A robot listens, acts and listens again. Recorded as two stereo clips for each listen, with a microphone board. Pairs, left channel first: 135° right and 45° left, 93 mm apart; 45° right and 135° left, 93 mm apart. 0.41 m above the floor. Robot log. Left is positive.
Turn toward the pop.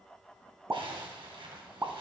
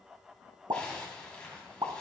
note: The pop: 105° left.
cmd yaw +105
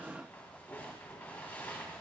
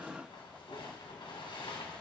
end: Facing where the pop came from. I can't hear it now.